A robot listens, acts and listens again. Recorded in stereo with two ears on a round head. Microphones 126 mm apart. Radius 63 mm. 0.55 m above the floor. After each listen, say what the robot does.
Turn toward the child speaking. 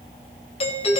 Keep listening.
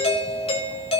Keep listening.
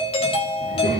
Turn 90° left.
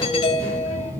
Turn 25° right.
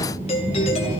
Turn 25° right.
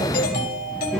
Facing the child speaking, over 4 m away.